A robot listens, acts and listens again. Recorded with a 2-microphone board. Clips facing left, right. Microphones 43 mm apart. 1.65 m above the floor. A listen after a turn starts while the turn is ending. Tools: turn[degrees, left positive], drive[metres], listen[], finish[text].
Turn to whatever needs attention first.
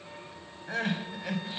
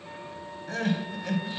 Thought: The crying: about 15° left or 165° left.
Action: turn[15]
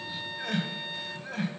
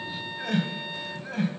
Action: finish[Facing the crying.]